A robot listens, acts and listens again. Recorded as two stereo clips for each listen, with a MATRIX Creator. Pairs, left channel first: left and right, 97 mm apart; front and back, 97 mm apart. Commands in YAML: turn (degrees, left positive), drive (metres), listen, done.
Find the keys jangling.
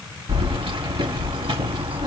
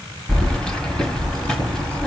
turn: -85
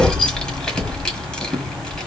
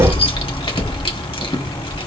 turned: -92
turn: 10
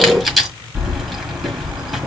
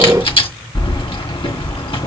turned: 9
done: "Found it: keys jangling, straight ahead, 1 to 2 m away."